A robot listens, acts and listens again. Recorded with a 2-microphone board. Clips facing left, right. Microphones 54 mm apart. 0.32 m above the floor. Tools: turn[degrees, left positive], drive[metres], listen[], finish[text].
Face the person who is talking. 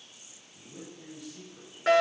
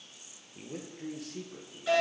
Action: turn[-90]
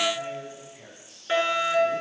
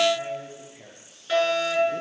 Thought: So it is at 10° right.
Action: turn[-10]
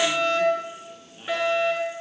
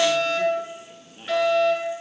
Thought: The man speaking is now 10° right.
Action: turn[-10]
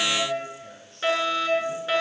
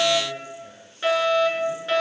Action: finish[Found it: a man speaking, straight ahead, over 4 m away.]